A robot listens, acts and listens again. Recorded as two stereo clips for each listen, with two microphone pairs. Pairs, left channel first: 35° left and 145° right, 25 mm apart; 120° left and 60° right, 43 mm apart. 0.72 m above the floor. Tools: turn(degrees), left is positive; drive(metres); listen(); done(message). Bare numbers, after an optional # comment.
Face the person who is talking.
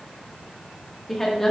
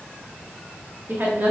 # The woman speaking: 40° right.
turn(-40)
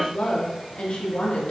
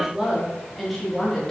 # The woman speaking is now 45° left.
turn(45)
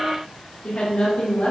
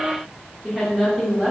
# The woman speaking is now 25° left.
turn(25)
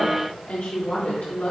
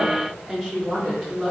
done("Found it: a woman speaking, straight ahead.")